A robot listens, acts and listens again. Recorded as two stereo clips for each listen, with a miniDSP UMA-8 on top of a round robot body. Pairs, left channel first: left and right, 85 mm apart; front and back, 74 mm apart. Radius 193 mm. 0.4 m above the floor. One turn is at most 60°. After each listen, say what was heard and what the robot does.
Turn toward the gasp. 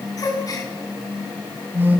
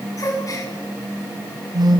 The gasp: 45° left. Turn 45° left.
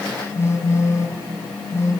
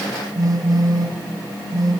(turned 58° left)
Nothing new. It was at 15° right. Turn 15° right.
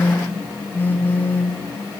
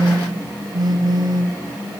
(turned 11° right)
I heard a gasp from this way, but can't make it out now.